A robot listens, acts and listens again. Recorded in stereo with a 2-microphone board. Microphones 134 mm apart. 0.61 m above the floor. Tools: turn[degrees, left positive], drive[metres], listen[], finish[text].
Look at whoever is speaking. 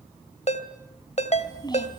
Thought: The child speaking: about 30° left or 150° left.
Action: turn[30]
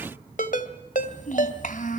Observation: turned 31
Thought: So it is at 100° left.
Action: turn[100]
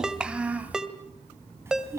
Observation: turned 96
Thought: The child speaking is now 20° right.
Action: turn[-20]
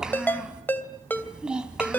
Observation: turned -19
Action: finish[Facing the child speaking, 2 to 4 m away.]